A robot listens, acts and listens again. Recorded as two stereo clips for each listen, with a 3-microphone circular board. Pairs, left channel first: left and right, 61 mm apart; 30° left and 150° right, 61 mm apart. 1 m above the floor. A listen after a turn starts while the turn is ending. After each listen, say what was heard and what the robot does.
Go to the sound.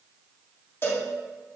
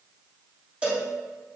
The cowbell: 140° left. Turn 140° left.
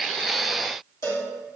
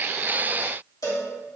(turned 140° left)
The cowbell is now 55° left. Turn 55° left.
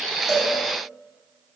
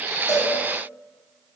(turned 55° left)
Keep listening.
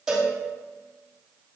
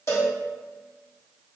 The cowbell is now 10° right. Turn 10° right.
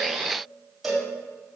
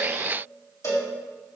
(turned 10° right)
Drive 1.0 m forward.
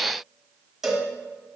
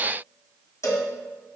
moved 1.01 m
Drive 1.0 m forward.
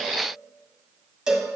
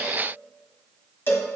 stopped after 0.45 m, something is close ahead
The cowbell is now 15° right. Turn 15° right.
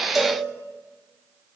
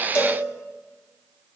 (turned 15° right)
Keep listening.
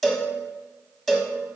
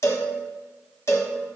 I am next to the cowbell.